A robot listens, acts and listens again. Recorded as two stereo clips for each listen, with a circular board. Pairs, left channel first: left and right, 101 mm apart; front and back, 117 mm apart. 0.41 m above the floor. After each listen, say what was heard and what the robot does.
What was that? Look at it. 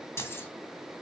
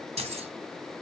The keys jangling: 155° left. Turn 155° left.
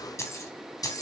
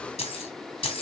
The keys jangling is now 40° left. Turn 40° left.
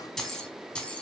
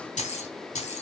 The keys jangling is now 10° left. Turn 10° left.
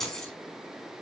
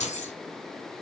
Found it: keys jangling, straight ahead, 2 to 4 m away.